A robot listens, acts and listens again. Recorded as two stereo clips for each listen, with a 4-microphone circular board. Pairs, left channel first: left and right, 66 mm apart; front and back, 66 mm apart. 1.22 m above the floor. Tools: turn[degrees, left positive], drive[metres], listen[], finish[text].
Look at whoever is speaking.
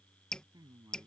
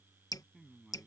Thought: The man speaking: 95° right.
Action: turn[-95]
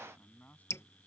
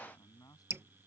Thought: The man speaking is now 25° left.
Action: turn[25]
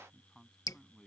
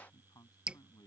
Action: finish[Facing the man speaking.]